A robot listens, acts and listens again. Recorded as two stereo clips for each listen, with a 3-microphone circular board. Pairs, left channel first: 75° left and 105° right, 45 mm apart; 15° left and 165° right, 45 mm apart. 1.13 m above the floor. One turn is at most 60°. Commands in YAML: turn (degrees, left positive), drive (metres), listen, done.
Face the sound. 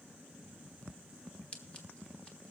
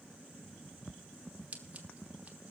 turn: 60
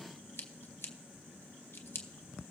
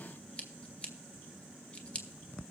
turn: 60
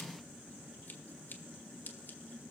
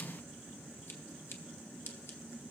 turn: 30
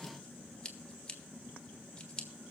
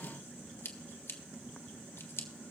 done: "Found it: scissors, straight ahead."